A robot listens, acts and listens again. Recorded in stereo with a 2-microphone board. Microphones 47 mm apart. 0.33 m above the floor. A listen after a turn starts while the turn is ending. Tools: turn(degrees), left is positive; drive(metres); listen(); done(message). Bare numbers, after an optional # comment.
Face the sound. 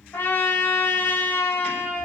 # The trumpet: about 55° left or 125° left.
turn(55)
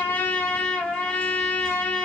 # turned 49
# So it is at 20° left.
turn(20)
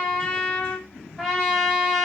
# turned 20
done("Found it: a trumpet, straight ahead.")